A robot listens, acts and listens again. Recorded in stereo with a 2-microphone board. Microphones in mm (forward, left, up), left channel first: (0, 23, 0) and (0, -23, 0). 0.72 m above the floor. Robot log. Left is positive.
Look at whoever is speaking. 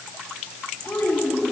note: The child speaking: about 55° left or 125° left.
cmd yaw +55
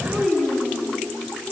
end: Found it: a child speaking, straight ahead.